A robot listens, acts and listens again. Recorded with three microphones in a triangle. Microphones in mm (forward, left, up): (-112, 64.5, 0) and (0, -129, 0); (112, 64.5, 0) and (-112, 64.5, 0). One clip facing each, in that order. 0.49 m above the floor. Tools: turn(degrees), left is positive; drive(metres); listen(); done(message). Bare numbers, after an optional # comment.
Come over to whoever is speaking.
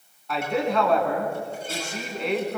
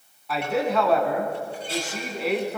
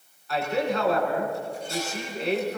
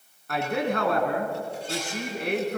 # The man speaking: 145° right.
turn(-145)
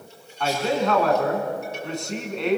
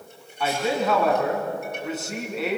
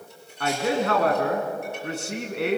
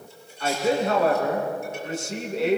# The man speaking is now 25° left.
turn(25)
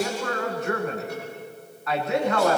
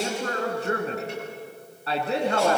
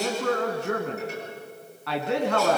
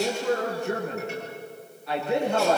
drive(1.0)
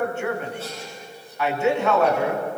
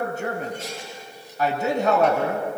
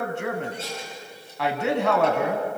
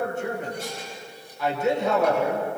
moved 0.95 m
# The man speaking is now 10° right.
turn(-10)
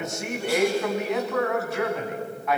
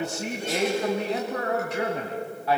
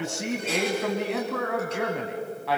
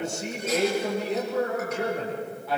drive(1.0)
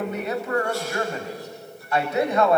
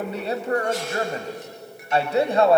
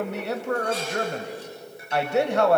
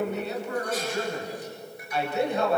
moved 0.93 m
drive(1.0)
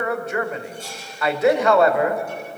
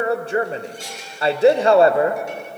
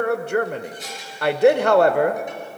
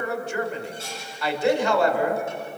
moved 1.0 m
drive(1.0)
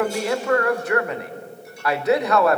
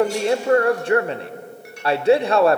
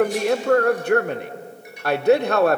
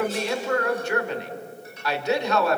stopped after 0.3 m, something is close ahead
done("I am next to the man speaking.")